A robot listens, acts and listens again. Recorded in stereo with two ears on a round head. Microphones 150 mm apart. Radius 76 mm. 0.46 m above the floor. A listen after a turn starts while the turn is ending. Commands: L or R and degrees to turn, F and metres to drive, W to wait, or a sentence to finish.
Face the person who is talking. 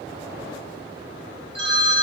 W
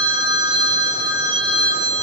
W
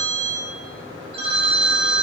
I can't make out anyone speaking to turn to.